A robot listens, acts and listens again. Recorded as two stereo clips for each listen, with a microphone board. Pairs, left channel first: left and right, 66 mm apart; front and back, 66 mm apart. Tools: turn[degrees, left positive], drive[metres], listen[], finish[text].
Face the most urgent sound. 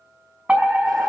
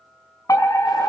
Thought: The fire alarm: 25° right.
Action: turn[-25]
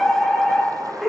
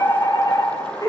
Action: finish[Facing the fire alarm, over 4 m away.]